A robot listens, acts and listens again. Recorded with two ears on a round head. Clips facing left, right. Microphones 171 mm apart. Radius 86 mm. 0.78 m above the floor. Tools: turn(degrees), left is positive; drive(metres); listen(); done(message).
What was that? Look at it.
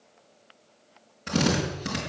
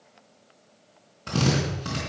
turn(degrees=20)
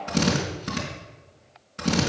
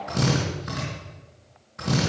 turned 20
turn(degrees=140)
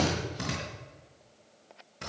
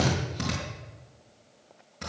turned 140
done("Found it: a drill, straight ahead, over 4 m away.")